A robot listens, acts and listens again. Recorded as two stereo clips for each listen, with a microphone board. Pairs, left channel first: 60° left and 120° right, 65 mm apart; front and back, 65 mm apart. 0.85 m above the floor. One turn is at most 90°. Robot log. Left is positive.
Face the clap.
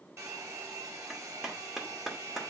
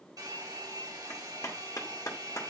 note: The clap: 35° right.
cmd yaw -35
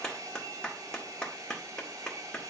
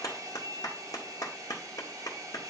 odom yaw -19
note: The clap is now 15° right.
cmd yaw -15
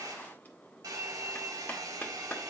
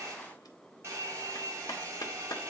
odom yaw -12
end: Found it: a clap, straight ahead, 2 to 4 m away.